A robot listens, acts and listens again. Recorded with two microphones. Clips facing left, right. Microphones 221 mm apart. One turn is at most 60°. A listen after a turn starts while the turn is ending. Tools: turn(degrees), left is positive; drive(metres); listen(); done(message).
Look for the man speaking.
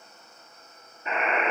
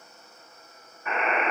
listen()
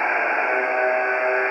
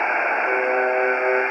listen()
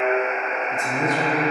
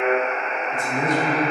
turn(degrees=45)
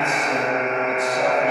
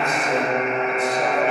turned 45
listen()
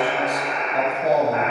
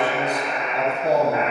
turn(degrees=60)
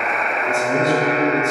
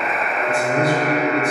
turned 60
turn(degrees=30)
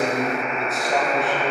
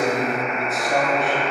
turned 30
done("Facing the man speaking, 1 to 2 m away.")